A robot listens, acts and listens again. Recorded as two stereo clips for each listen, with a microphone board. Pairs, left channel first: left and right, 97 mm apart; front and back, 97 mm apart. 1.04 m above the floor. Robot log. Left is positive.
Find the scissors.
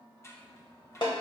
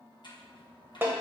note: The scissors: 30° left.
cmd yaw +30
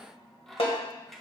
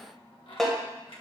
end: Found it: scissors, straight ahead.